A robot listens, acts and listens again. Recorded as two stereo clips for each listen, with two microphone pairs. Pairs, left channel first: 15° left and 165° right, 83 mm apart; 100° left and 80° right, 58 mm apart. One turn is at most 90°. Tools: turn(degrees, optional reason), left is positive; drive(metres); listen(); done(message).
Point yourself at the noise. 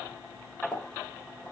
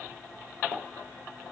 turn(degrees=-90, reason="The pop: 90° right.")
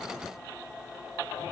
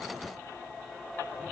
done("Facing where the pop came from. I can't hear it now.")